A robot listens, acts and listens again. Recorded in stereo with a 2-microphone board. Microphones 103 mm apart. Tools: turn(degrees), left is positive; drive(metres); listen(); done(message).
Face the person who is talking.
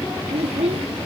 turn(degrees=-90)
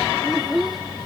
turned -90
done("Found it: a child speaking, straight ahead.")